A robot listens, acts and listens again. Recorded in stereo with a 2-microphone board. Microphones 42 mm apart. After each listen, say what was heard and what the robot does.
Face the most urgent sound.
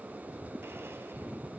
Keep listening.
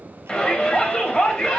The shout: about 20° left or 160° left. Turn 20° left.
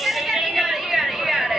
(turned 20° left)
Found it: a shout, straight ahead, 2 to 4 m away.